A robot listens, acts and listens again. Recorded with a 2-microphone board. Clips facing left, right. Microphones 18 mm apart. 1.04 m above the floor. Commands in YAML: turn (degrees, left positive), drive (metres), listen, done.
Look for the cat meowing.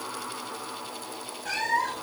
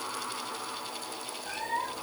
turn: 60
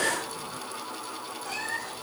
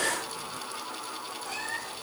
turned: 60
done: "Facing the cat meowing."